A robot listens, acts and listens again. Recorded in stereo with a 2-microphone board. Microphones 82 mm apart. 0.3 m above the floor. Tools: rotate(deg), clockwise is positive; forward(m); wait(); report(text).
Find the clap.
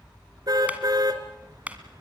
rotate(20)
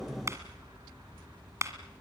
rotate(140)
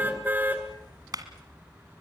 rotate(55)
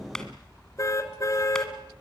rotate(-10)
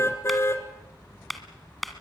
report("Facing the clap.")